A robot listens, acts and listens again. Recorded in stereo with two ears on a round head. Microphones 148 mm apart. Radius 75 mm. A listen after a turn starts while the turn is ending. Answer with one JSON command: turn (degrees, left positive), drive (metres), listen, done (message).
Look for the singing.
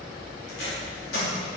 {"listen": true}
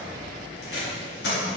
{"listen": true}
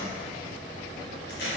{"done": "I can't make out singing to turn to."}